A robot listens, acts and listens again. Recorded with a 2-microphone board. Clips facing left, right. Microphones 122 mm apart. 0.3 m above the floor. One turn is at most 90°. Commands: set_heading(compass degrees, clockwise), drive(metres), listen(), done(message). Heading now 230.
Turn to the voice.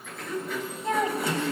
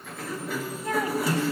set_heading(205)
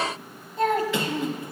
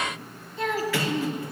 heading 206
set_heading(116)
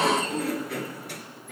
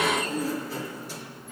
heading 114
set_heading(79)
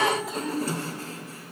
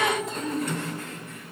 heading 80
done("Found it: a child speaking, straight ahead, 1 to 2 m away.")